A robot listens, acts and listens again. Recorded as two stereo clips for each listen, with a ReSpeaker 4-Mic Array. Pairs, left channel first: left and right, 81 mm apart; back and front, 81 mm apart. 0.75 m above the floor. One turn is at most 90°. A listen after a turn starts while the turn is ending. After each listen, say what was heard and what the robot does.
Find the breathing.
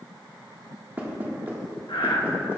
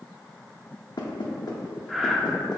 The breathing: 90° left. Turn 90° left.
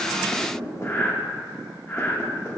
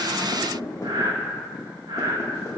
The breathing is now 25° left. Turn 25° left.
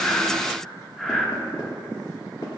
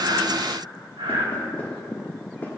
Facing the breathing, under 1 m away.